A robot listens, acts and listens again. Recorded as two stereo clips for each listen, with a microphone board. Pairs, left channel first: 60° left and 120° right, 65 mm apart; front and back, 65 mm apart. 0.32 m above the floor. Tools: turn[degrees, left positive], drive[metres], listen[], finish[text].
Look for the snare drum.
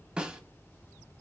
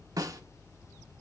Thought: The snare drum: 165° left.
Action: turn[165]
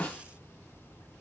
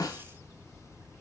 Thought: The snare drum is now 10° right.
Action: turn[-10]
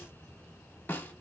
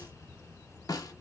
Action: finish[Found it: a snare drum, straight ahead.]